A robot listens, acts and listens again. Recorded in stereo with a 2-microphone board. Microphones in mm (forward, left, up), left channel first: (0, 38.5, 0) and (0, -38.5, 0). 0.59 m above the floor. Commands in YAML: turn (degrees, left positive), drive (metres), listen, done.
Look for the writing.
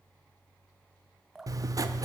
turn: -45
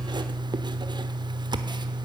turn: -85
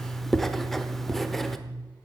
done: "Found it: writing, straight ahead."